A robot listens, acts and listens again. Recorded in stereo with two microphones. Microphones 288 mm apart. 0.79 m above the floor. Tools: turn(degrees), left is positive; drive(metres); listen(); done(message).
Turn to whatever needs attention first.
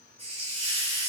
listen()
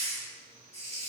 listen()
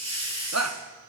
turn(degrees=-65)
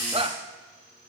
turn(degrees=-25)
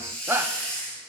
turn(degrees=-10)
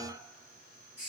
listen()
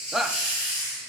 done("Facing the shout, under 1 m away.")